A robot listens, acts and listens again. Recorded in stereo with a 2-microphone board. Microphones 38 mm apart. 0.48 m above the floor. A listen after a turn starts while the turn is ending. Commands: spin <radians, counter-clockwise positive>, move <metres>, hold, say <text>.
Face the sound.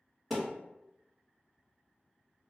spin 0.52
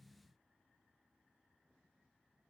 hold
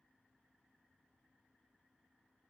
say I heard a thud, but can't make it out now. It was about 30° right or 150° left.